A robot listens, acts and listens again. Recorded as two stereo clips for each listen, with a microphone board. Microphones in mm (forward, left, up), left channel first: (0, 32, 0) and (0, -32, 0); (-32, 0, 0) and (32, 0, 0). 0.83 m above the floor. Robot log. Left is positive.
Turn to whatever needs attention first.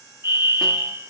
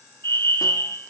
note: The fire alarm: 130° right.
cmd yaw -130
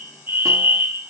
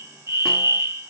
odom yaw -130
note: The fire alarm is now 35° right.
cmd yaw -35
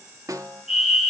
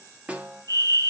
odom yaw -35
note: The fire alarm is now 10° right.
cmd yaw -10
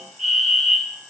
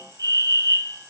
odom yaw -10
end: Found it: a fire alarm, straight ahead, 2 to 4 m away.